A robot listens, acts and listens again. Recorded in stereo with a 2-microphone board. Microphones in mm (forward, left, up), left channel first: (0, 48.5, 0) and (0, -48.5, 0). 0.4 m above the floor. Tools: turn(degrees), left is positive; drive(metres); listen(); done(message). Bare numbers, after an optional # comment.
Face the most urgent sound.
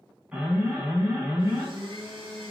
turn(-30)
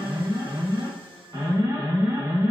# So it is at 140° right.
turn(-140)
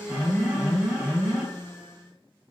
# The alarm is now 20° right.
turn(-20)
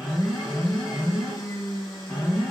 done("Found it: an alarm, straight ahead.")